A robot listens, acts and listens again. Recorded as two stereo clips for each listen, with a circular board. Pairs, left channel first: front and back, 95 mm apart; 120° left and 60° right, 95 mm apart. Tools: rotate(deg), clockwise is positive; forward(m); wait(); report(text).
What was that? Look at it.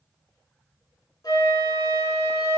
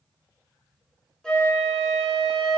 rotate(-40)
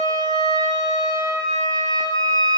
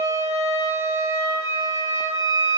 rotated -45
report("Found it: a flute, straight ahead, 2 to 4 m away.")